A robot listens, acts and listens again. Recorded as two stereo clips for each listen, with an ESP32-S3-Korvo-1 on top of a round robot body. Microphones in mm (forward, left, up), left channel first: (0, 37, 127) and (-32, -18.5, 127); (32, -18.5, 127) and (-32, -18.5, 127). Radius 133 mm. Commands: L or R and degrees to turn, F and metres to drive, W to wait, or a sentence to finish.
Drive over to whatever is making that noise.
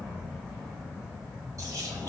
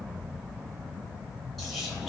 R90
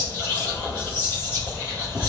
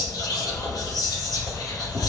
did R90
F1.0
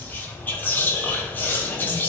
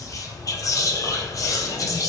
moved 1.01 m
F1.0
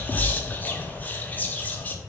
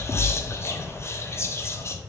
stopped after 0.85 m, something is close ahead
L10
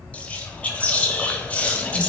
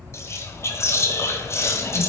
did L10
I am next to the whispering.